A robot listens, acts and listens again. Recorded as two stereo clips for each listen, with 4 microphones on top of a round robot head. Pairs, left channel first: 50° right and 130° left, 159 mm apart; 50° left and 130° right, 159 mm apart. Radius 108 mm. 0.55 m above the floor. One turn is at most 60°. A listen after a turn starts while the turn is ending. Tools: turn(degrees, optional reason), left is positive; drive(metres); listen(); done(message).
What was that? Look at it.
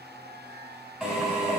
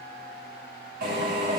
turn(degrees=-60, reason="The drill: 140° right.")
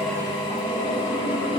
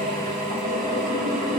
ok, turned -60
turn(degrees=-60, reason="The drill is now 95° right.")
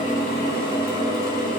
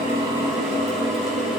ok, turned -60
turn(degrees=-40, reason="The drill is now 40° right.")
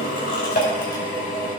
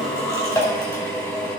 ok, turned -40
turn(degrees=-20, reason="The drill is now 20° right.")
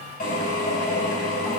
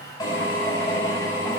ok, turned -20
turn(degrees=-10, reason="The drill is now 10° right.")
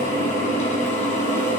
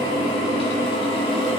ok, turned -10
done("Facing the drill.")